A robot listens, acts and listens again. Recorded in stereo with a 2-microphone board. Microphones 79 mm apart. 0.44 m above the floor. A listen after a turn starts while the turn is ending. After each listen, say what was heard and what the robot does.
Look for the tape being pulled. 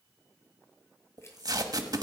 The tape being pulled: about 60° right or 120° right. Turn 60° right.
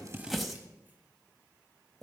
Found it: tape being pulled, straight ahead, 1 to 2 m away.